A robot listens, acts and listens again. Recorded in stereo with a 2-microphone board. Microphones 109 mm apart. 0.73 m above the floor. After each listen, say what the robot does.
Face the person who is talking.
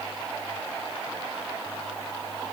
Keep listening.
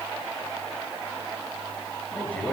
Turn 30° left.
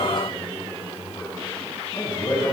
Turn 135° left.
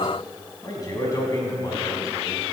Turn 35° left.
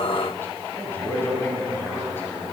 Turn 20° left.
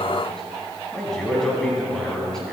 Found it: a man speaking, straight ahead, over 4 m away.